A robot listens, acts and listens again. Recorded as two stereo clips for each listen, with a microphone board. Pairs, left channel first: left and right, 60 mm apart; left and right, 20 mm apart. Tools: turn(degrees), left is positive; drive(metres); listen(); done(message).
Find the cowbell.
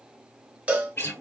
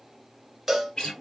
turn(degrees=-20)
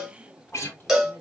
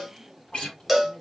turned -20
done("Facing the cowbell, 1 to 2 m away.")